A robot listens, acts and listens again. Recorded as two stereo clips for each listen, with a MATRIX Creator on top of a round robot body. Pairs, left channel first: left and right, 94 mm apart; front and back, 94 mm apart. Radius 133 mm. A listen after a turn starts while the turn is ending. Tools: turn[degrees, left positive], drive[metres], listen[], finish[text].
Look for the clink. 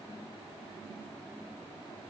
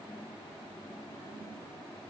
Action: listen[]
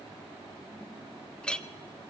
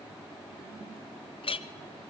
Thought: The clink: 10° left.
Action: turn[10]
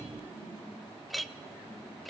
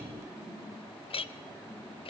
Action: finish[Found it: a clink, straight ahead, under 1 m away.]